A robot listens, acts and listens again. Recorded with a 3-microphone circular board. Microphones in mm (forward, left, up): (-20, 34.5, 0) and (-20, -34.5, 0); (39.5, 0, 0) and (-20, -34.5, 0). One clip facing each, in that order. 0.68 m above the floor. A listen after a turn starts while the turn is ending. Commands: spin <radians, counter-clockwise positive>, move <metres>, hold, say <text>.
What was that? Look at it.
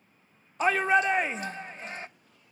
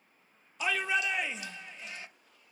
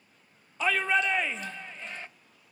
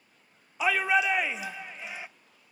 spin 2.27
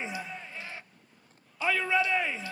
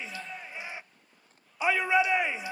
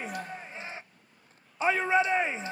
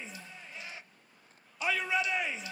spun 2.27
spin -0.35
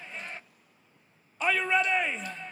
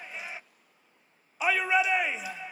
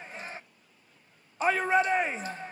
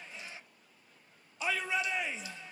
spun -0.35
spin -0.17
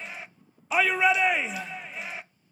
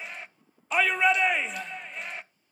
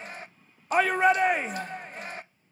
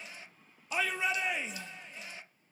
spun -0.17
say Found it: a shout, straight ahead.